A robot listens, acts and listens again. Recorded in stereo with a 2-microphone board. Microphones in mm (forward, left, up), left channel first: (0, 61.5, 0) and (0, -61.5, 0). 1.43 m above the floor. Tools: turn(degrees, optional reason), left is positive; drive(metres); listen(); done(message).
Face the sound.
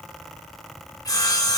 turn(degrees=30, reason="The sawing: about 30° left or 150° left.")
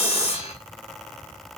turn(degrees=110, reason="So it is at 110° left.")
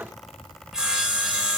done("Facing the sawing.")